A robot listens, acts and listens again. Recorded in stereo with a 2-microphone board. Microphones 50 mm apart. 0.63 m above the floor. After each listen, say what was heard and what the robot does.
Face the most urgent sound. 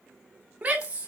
The shout: about 25° right or 155° right. Turn 25° right.
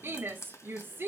So it is at 125° right. Turn 125° right.
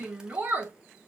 The shout is now 35° right. Turn 35° right.
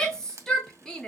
The shout is now 15° left. Turn 15° left.
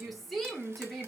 Facing the shout.